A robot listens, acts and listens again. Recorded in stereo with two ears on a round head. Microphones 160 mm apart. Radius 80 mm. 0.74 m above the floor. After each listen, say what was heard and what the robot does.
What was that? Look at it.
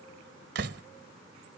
The door slam: about 65° right or 115° right. Turn 65° right.
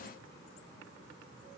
Keep listening.
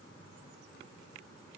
I heard a door slam, but can't make it out now. It was about straight ahead or 50° right.